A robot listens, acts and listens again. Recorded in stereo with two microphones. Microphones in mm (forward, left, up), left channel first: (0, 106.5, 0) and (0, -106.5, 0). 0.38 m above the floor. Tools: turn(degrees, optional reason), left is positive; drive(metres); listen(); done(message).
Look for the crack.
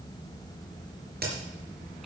turn(degrees=-45, reason="The crack: about 45° right or 135° right.")
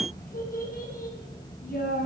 listen()
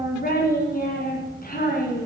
done("I heard a crack, but can't make it out now. It was about straight ahead or 90° right.")